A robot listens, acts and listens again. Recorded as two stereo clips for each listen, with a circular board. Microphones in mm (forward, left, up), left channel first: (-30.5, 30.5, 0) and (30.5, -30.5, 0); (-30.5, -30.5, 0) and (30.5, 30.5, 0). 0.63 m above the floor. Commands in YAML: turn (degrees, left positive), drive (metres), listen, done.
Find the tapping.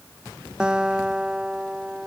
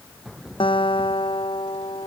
listen: true
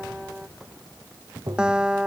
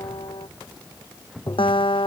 turn: -90
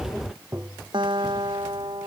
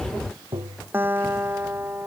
turn: 15
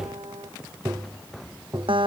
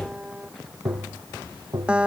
done: "Facing the tapping."